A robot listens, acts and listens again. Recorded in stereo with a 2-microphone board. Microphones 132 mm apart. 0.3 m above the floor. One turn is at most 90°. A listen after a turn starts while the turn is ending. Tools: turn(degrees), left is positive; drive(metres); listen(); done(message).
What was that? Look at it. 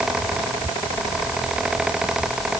listen()
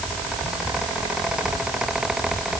listen()
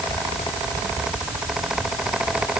done("I can't make out anything to turn to.")